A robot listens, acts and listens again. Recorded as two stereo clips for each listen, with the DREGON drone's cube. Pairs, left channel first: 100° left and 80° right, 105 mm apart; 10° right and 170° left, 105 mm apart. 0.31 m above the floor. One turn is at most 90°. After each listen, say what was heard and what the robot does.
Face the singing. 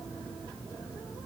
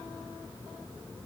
Keep listening.
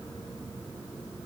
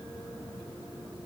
Keep listening.
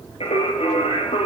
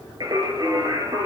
The singing: 120° left. Turn 90° left.
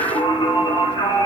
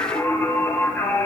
The singing is now 55° left. Turn 55° left.
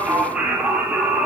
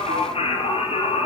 Facing the singing.